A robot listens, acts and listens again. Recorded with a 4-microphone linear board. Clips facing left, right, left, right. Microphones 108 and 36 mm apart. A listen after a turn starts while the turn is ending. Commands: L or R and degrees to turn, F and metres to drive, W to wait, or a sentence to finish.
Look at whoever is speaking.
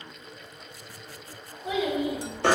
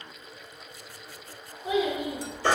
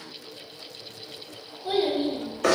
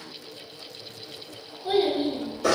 R30
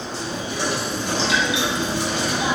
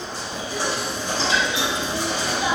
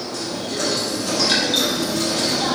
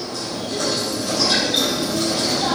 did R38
W
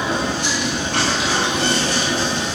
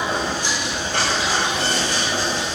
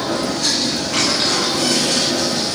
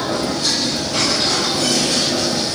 W
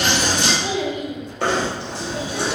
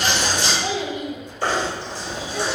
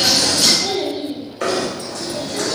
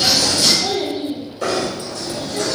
L30
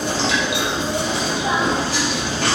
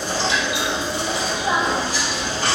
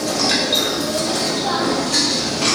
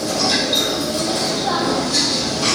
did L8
L25
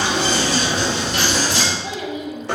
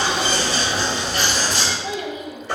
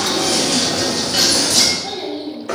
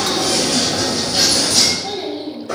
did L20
Facing the child speaking.